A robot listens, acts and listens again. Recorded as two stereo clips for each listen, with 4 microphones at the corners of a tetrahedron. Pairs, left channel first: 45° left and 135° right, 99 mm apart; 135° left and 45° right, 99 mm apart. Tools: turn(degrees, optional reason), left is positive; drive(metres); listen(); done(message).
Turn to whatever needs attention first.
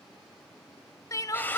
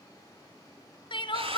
turn(degrees=100, reason="The crying: 100° left.")
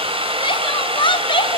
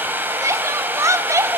turn(degrees=15, reason="The crying is now 15° left.")
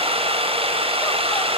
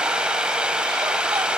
listen()
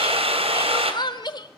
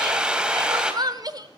done("Found it: crying, straight ahead.")